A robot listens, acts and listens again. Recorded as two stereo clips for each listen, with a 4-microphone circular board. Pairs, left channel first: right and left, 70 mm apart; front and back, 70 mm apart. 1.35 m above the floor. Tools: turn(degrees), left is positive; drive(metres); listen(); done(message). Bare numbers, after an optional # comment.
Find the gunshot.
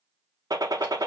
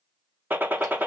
# The gunshot: 120° left.
turn(120)
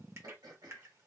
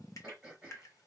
done("Facing where the gunshot came from. I can't hear it now.")